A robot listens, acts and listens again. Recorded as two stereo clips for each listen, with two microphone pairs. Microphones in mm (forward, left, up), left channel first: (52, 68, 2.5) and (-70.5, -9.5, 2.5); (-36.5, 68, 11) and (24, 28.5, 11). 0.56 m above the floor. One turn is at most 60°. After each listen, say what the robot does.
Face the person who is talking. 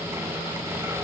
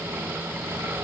Keep listening.
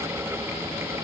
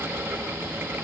Keep listening.
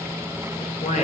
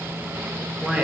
Turn 40° left.
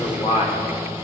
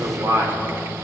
Facing the man speaking.